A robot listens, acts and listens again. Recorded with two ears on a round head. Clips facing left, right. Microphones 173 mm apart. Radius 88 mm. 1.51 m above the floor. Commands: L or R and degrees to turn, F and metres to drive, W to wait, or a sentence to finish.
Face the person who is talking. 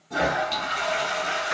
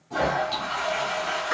W
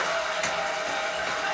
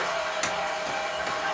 W
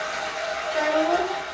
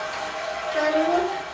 R20
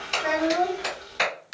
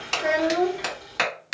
R140
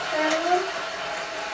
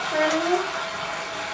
R45
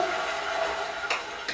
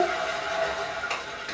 W
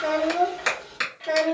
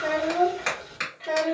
L10
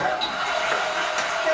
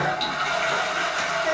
W
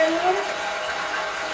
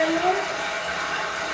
Facing the child speaking.